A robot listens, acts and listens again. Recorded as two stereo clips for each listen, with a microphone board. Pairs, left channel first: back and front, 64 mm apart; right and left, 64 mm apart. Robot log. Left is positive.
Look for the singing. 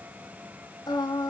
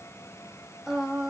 note: The singing: 170° left.
cmd yaw +170
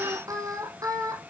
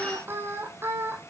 note: The singing is now 35° left.
cmd yaw +35
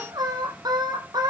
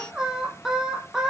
end: Facing the singing.